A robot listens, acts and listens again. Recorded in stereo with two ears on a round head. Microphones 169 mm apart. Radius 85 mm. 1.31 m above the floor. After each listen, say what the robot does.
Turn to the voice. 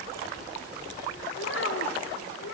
Turn 75° left.
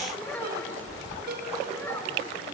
Turn 10° left.
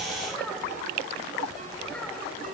Keep listening.
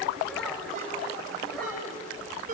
Keep listening.
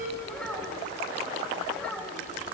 Facing the child speaking.